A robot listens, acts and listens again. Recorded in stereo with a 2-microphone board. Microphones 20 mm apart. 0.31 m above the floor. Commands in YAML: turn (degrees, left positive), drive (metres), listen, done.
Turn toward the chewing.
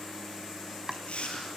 turn: 90
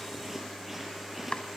turn: -10
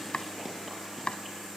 listen: true
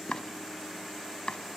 listen: true
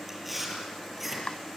done: "Found it: chewing, straight ahead, over 4 m away."